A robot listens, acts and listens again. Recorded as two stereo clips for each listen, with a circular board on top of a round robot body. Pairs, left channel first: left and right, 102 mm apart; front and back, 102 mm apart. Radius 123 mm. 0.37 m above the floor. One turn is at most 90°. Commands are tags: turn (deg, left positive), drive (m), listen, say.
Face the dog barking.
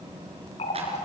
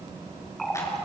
<listen/>
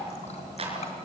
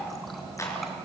<listen/>
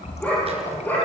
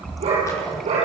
<turn deg="90"/>
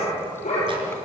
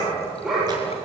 <turn deg="90"/>
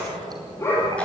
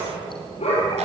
<turn deg="25"/>
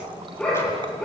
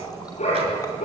<turn deg="10"/>
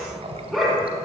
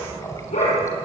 <say>Found it: a dog barking, straight ahead, over 4 m away.</say>